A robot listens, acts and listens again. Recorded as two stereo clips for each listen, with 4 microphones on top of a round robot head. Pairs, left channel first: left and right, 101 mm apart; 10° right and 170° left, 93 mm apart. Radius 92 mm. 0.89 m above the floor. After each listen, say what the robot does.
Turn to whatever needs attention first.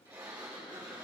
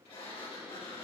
Keep listening.
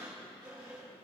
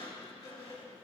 Keep listening.
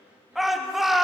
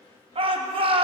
Turn 175° right.
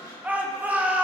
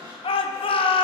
Turn 15° right.
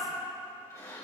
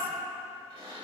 Keep listening.
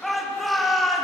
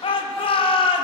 Facing the shout.